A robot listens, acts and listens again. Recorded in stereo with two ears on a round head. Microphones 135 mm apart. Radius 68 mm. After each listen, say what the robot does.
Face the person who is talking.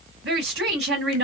Turn 90° right.
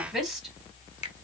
Found it: a woman speaking, straight ahead, 2 to 4 m away.